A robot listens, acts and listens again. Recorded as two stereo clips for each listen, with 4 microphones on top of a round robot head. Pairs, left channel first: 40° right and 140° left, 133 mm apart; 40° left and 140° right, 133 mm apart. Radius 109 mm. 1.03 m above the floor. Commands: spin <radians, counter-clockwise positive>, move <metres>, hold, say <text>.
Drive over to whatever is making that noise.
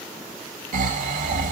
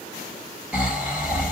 spin 2.36
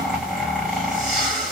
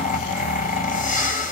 spin 0.96
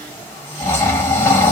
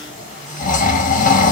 spin 0.61
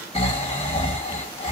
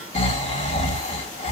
move 1.0
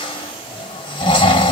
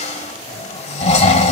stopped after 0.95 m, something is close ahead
spin 0.17
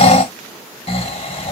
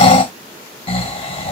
say I am next to the snoring.